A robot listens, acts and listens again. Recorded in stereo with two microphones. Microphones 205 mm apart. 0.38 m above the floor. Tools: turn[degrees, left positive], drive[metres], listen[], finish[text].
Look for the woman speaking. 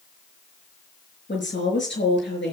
Thought: The woman speaking: about 65° left or 115° left.
Action: turn[65]
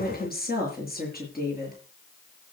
Thought: So it is at 45° left.
Action: turn[45]
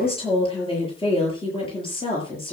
Thought: The woman speaking is now 25° left.
Action: turn[25]
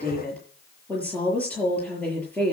Action: finish[Facing the woman speaking, over 4 m away.]